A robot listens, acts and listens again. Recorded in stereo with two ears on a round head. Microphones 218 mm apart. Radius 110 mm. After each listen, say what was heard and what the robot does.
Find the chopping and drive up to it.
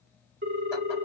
Keep listening.
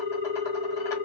Keep listening.
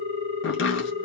The chopping: about 55° left or 125° left. Turn 55° left.
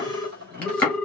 Drive 1.0 m forward.
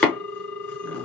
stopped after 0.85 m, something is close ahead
The chopping is now 10° left. Turn 10° left.
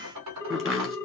I am next to the chopping.